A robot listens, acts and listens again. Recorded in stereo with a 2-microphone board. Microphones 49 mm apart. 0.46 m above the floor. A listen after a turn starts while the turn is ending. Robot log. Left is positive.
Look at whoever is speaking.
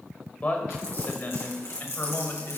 note: The man speaking: about 50° left or 130° left.
cmd yaw +50
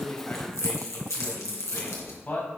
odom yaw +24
note: The man speaking: about 40° left or 140° left.
cmd yaw +40
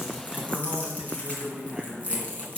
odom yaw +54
end: Found it: a man speaking, straight ahead.